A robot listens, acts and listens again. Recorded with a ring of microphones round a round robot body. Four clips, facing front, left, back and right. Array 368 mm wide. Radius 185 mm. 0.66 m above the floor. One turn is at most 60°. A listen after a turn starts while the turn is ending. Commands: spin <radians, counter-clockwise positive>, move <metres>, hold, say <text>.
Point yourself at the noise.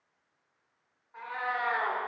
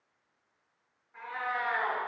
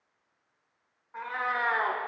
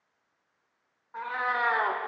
spin -1.05
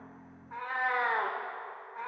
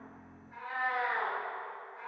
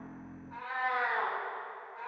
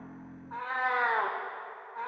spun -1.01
spin -1.05
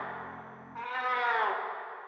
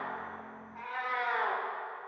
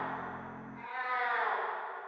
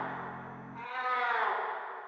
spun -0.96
say Found it: a cat meowing, straight ahead.